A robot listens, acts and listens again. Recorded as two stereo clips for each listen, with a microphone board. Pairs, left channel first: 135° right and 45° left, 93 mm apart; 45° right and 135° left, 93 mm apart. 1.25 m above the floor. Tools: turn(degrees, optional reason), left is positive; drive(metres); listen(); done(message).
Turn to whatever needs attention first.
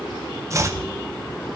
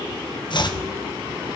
listen()
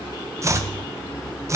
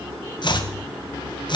listen()
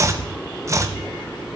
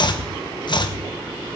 done("I can't make out anything urgent, only chopping.")